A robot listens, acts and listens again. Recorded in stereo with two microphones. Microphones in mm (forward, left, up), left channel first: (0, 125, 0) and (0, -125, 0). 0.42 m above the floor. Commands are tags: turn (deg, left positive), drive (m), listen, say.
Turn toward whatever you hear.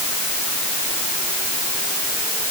<listen/>
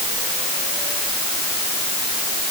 <listen/>
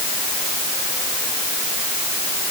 <say>I can't make out anything to turn to.</say>